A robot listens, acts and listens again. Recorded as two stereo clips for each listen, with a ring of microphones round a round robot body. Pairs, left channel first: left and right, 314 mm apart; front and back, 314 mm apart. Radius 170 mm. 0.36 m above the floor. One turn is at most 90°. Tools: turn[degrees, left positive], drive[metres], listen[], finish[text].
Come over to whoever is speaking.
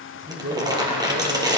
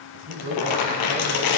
Thought: The man speaking: 150° right.
Action: turn[-90]
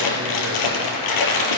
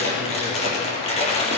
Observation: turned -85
Thought: Nothing new. It was at 65° right.
Action: turn[-65]
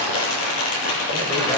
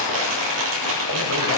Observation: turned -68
Action: listen[]
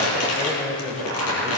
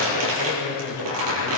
Action: drive[1.0]
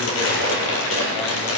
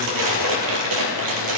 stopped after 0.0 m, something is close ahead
Action: listen[]
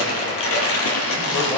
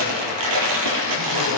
Action: listen[]
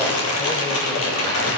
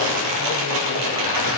Action: finish[I heard a man speaking from this way, but can't make it out now. I did not reach it.]